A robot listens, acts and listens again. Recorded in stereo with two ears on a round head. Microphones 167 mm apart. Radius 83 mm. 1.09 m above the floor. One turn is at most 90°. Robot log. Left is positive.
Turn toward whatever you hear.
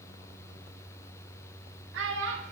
note: The child speaking: about 70° right or 110° right.
cmd yaw -70
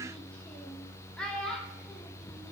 end: Found it: a child speaking, straight ahead.